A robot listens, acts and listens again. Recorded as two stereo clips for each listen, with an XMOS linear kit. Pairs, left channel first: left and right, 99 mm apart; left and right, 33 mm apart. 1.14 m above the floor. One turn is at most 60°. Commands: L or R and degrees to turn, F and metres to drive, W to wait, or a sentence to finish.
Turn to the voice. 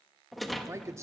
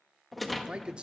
R30
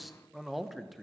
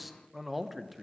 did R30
Found it: a man speaking, straight ahead, under 1 m away.